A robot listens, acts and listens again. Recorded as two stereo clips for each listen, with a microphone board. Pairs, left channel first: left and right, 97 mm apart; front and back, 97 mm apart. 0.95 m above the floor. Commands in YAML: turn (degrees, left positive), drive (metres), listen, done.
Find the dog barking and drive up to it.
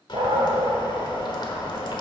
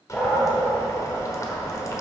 turn: -80
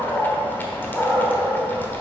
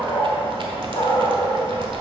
turn: 20
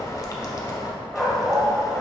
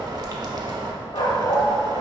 drive: 1.0
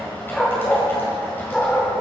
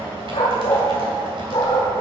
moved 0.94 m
turn: 10
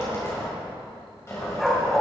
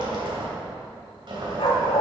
drive: 1.0
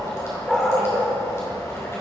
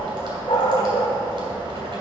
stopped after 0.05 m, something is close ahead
done: "Arrived at the dog barking, straight ahead."